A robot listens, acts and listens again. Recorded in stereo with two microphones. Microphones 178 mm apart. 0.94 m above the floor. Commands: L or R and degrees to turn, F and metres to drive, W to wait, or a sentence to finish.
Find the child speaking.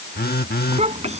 R40
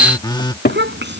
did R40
R100
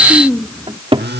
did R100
Facing the child speaking.